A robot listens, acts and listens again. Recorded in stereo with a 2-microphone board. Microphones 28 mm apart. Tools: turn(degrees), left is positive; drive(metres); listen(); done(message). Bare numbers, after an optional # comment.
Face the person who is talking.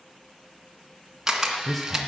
turn(30)
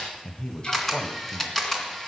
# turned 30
# So it is at 135° left.
turn(135)
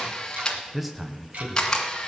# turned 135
done("Found it: a man speaking, straight ahead.")